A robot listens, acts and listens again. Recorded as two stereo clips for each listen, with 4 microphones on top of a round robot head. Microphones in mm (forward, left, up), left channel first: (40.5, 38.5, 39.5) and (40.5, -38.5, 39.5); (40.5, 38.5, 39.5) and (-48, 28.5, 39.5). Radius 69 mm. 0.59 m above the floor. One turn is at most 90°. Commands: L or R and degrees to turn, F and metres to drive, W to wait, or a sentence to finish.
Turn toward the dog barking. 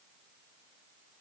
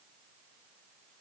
W
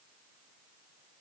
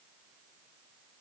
W
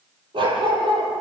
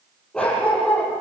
R80
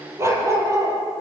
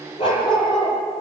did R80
R40
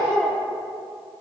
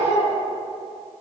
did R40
L10
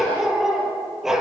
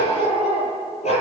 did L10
Facing the dog barking.